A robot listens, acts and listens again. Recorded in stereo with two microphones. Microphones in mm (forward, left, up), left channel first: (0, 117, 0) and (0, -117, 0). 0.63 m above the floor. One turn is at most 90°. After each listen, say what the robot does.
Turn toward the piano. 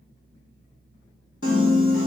Turn 60° left.
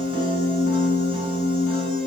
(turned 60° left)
Turn 60° left.
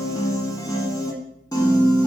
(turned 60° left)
Turn 15° left.
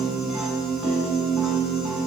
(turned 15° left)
Found it: a piano, straight ahead, 1 to 2 m away.